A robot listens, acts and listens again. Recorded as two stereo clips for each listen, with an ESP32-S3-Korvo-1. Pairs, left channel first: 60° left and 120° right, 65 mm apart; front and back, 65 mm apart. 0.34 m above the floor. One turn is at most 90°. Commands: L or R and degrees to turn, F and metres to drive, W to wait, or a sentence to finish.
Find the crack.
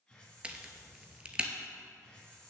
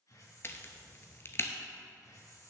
R50
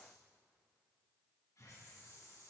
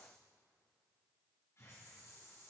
Facing where the crack came from. I can't hear it now.